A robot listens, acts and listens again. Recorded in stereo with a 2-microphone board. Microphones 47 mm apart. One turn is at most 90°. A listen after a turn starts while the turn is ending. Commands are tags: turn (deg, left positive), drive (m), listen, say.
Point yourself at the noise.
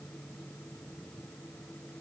<listen/>
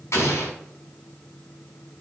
<turn deg="75"/>
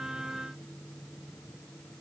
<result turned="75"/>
<listen/>
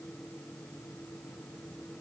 <say>I heard an explosion, but can't make it out now. It was about straight ahead or 30° left.</say>